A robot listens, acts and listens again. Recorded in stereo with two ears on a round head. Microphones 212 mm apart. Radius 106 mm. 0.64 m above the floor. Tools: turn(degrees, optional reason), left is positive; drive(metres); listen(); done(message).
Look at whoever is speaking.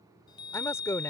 turn(degrees=30)
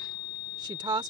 turn(degrees=-20, reason="So it is at 20° right.")
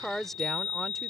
done("Facing the woman speaking.")